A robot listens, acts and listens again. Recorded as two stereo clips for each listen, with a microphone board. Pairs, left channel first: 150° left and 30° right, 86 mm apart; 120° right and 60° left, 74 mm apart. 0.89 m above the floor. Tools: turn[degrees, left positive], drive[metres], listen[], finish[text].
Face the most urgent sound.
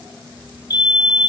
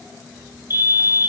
Thought: The fire alarm: 115° left.
Action: turn[115]
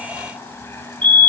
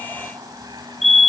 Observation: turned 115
Thought: The fire alarm is now 35° right.
Action: turn[-35]
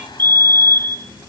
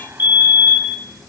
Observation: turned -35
Action: finish[Facing the fire alarm.]